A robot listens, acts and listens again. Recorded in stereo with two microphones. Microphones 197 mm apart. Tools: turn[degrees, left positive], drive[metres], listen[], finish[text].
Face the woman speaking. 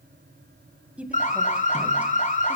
Action: turn[-30]
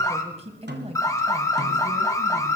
Thought: So it is at 140° right.
Action: turn[-140]
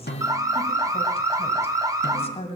Thought: The woman speaking is now 35° left.
Action: turn[35]
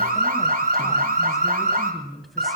Action: finish[Found it: a woman speaking, straight ahead.]